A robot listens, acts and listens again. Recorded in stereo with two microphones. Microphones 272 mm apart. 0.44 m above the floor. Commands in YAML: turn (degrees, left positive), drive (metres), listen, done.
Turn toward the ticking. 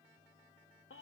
listen: true
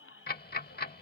turn: 35
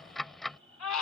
done: "Found it: ticking, straight ahead."